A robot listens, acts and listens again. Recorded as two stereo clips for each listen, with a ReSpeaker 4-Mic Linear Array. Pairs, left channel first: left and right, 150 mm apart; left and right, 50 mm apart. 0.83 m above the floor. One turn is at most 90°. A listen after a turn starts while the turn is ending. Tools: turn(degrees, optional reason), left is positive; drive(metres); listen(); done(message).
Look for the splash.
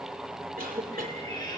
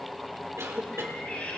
listen()
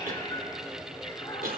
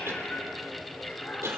listen()
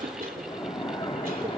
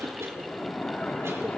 turn(degrees=40, reason="The splash: about 40° left or 140° left.")
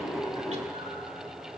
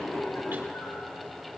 listen()
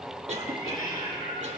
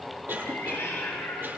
done("I heard a splash, but can't make it out now. It was about straight ahead or 100° left.")